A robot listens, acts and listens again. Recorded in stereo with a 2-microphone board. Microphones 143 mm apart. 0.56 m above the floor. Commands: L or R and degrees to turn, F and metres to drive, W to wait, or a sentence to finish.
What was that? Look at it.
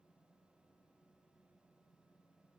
W
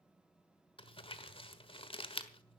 L40
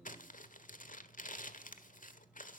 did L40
L100
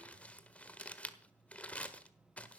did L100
L10
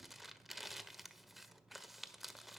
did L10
Found it: crumpling, straight ahead.